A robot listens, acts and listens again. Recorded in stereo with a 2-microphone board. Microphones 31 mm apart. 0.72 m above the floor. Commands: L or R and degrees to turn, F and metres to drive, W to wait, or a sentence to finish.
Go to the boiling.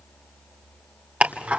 W
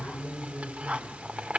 W
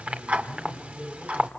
I can't make out boiling to turn to.